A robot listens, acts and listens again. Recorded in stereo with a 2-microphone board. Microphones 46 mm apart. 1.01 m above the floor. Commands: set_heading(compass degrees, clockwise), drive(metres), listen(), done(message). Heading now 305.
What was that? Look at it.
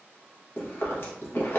set_heading(250)
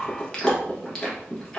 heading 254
set_heading(239)
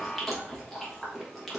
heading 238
done("Found it: chewing, straight ahead, 1 to 2 m away.")